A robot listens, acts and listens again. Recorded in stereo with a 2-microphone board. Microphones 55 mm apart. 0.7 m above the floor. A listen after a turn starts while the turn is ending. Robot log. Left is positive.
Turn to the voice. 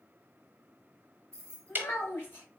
note: The child speaking: about 40° left or 140° left.
cmd yaw +40
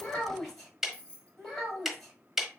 end: Found it: a child speaking, straight ahead.